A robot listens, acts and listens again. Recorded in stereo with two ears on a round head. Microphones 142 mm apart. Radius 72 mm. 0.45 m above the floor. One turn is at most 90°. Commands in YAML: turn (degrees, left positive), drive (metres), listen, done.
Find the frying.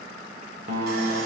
listen: true
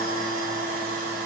listen: true
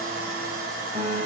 done: "I can't make out frying to turn to."